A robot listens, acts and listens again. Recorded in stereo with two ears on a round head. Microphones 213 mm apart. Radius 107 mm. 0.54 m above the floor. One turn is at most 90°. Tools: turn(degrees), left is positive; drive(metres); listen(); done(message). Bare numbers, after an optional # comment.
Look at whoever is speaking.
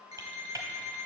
listen()
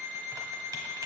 listen()
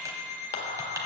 # The man speaking: about 35° left or 145° left.
turn(35)
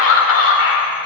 # So it is at 105° left.
turn(90)
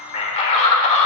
# The man speaking is now 30° left.
turn(30)
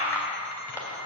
# The man speaking is now 10° left.
turn(10)
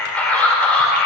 done("Found it: a man speaking, straight ahead, 1 to 2 m away.")